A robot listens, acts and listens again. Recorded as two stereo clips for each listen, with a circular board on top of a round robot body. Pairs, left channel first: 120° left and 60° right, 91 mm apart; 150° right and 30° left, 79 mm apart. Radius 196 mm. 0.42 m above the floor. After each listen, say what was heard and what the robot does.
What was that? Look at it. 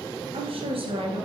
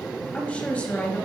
The woman speaking: 70° right. Turn 70° right.
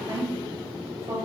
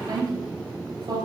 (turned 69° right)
Facing the woman speaking.